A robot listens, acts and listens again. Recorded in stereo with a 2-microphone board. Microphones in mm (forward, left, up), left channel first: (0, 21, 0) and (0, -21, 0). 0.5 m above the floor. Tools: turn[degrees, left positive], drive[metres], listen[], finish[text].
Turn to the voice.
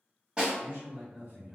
Thought: The man speaking: about 50° right or 130° right.
Action: turn[-50]
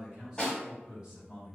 Thought: So it is at 15° right.
Action: turn[-15]
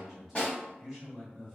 Action: finish[Facing the man speaking, 1 to 2 m away.]